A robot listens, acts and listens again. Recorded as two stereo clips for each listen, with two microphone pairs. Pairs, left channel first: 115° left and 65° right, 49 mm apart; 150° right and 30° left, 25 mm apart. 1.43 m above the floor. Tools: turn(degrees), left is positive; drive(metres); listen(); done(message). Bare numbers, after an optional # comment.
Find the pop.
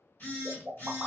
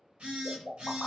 # The pop: 135° right.
turn(-135)
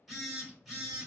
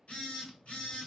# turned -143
# Nothing new. It was at 10° left.
turn(10)
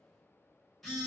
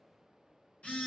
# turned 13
done("I heard a pop from this way, but can't make it out now.")